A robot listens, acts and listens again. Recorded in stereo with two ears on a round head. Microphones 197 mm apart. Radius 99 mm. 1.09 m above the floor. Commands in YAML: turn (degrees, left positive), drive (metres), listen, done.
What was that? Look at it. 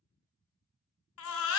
turn: 65
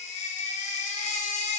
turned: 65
turn: 35
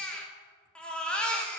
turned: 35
done: "Facing the baby crying."